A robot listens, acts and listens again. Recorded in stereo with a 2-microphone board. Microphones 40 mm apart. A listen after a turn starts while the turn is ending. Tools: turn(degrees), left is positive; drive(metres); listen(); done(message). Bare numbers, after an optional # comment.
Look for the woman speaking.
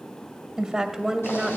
turn(-30)
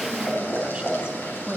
turn(-30)
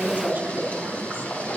listen()
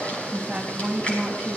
# So it is at 155° right.
turn(-155)
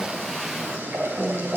listen()
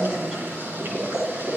listen()
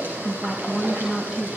# The woman speaking is now 10° right.
turn(-10)
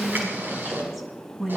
done("Found it: a woman speaking, straight ahead, 2 to 4 m away.")